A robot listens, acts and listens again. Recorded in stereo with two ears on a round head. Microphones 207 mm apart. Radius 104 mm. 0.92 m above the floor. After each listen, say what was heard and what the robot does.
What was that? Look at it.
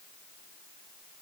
Keep listening.
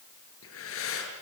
The breathing: about 60° left or 120° left. Turn 60° left.
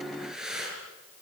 Facing the breathing, over 4 m away.